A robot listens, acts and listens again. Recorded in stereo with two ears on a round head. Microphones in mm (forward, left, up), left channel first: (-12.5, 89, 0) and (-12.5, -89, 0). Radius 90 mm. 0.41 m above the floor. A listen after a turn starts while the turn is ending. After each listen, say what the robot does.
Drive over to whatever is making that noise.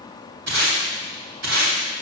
Turn 65° right.
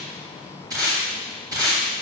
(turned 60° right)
Turn 25° right.
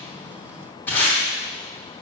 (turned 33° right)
Turn 10° left.
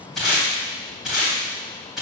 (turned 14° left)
Drive 1.0 m forward.
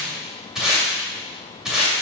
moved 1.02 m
Drive 1.0 m forward.
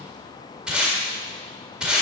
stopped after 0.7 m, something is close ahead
I am next to the tape being pulled.